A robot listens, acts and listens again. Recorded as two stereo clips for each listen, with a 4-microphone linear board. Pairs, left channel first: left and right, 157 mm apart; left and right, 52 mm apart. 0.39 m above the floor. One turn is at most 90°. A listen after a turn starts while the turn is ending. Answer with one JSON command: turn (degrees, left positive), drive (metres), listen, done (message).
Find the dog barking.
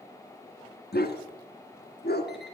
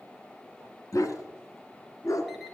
{"turn": 70}
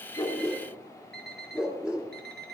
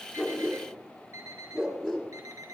{"done": "Facing the dog barking, 2 to 4 m away."}